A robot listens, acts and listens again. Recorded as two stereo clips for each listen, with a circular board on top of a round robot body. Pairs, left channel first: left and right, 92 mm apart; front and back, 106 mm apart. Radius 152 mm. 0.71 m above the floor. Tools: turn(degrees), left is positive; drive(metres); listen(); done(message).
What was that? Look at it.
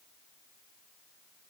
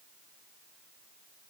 listen()
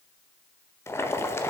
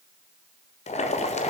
turn(degrees=25)
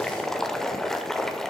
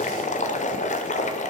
done("Found it: boiling, straight ahead, 1 to 2 m away.")